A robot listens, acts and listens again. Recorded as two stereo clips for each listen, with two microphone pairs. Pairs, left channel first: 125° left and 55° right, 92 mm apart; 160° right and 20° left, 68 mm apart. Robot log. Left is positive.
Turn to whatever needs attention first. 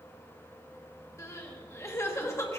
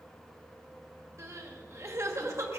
note: The crying: 65° left.
cmd yaw +65
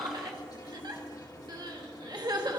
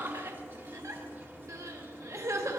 note: The crying is now 15° right.
cmd yaw -15
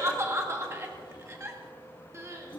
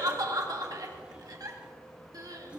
end: Found it: crying, straight ahead, 1 to 2 m away.